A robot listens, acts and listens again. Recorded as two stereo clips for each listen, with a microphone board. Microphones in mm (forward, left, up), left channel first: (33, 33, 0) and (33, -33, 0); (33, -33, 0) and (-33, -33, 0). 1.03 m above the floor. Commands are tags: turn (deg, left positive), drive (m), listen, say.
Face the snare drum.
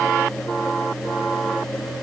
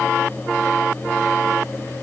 <listen/>
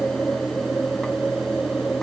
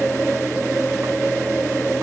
<listen/>
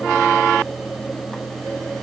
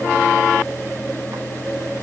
<say>I can't make out a snare drum to turn to.</say>